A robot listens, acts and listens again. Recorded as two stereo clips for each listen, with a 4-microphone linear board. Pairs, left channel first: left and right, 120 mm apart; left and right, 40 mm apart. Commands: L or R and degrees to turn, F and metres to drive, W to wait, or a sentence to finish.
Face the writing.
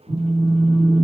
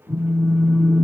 W
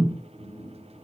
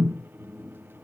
W
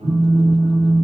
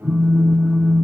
I can't make out writing to turn to.